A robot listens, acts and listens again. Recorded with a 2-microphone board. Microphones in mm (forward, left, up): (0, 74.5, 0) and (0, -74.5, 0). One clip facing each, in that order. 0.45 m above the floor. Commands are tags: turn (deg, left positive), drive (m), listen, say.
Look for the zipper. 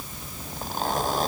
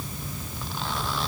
<turn deg="45"/>
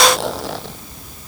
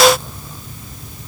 <turn deg="90"/>
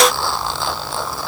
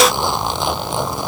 <turn deg="-20"/>
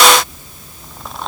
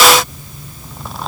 <say>Found it: a zipper, straight ahead.</say>